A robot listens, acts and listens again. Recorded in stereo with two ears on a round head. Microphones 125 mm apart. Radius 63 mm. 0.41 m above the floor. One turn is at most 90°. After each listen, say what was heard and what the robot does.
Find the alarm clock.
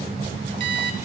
The alarm clock: about 40° right or 140° right. Turn 40° right.
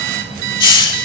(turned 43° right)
So it is at 95° right. Turn 90° right.
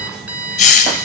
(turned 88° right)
The alarm clock is now 10° right. Turn 10° right.
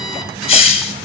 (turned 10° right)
Keep listening.
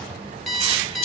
Facing the alarm clock, 1 to 2 m away.